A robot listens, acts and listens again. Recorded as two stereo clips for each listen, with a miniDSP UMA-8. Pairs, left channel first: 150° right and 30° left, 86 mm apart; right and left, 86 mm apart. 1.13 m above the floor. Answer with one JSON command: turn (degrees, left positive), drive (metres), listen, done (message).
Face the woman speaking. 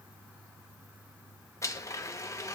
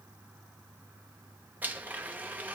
{"listen": true}
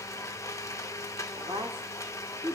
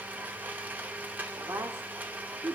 {"turn": 40}
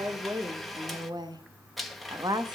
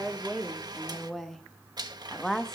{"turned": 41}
{"done": "Found it: a woman speaking, straight ahead."}